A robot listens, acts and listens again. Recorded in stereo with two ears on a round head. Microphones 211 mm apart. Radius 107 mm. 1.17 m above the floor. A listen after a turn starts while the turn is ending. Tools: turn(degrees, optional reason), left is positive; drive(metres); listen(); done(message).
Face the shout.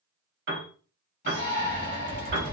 turn(degrees=45, reason="The shout: about 45° left or 135° left.")
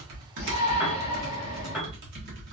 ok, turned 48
turn(degrees=90, reason="So it is at 90° left.")
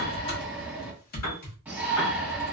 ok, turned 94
done("Facing the shout, 1 to 2 m away.")